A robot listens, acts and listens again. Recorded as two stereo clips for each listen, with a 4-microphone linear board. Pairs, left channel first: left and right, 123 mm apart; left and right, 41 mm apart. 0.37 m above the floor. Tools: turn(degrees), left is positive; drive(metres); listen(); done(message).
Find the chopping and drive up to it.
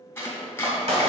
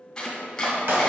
turn(degrees=15)
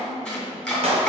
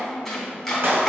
drive(metres=1.0)
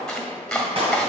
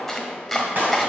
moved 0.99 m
drive(metres=1.0)
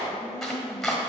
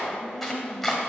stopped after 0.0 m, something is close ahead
done("Arrived at the chopping, straight ahead.")